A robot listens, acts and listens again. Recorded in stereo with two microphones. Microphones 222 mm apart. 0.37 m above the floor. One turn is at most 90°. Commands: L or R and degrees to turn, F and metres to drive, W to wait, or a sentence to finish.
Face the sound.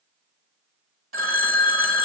R70
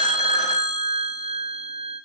R30
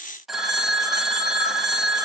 Facing the phone ringing.